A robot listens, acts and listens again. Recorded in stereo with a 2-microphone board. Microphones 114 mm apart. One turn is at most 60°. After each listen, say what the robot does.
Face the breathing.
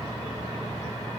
Keep listening.
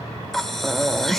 Turn 30° left.
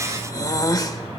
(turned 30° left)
Turn 60° left.
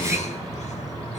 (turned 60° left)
Turn 60° left.
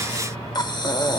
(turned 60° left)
Turn 40° left.
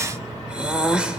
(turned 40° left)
Turn 10° right.
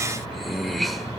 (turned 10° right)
Found it: breathing, straight ahead.